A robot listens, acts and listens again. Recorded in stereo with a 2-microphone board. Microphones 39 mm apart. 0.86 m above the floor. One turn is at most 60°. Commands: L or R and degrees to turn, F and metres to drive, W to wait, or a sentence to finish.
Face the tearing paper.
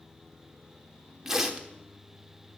R30
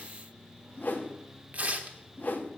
R60
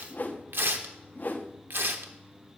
R60
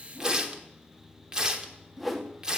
R20
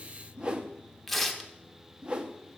Found it: tearing paper, straight ahead.